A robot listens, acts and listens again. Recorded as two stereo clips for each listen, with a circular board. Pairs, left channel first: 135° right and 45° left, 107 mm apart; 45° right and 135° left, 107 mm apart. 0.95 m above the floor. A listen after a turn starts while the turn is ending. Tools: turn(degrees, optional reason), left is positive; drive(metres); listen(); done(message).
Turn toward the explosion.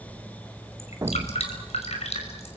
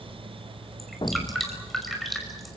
turn(degrees=-10, reason="The explosion: 10° right.")
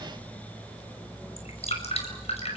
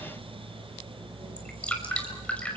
done("Facing where the explosion came from. I can't hear it now.")